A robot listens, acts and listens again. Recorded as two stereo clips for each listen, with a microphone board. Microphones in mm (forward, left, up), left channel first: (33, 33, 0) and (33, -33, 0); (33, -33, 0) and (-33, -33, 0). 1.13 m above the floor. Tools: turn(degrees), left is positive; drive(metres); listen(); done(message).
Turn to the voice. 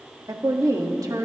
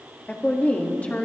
turn(degrees=-65)
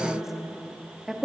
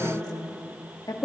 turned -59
done("Found it: a woman speaking, straight ahead.")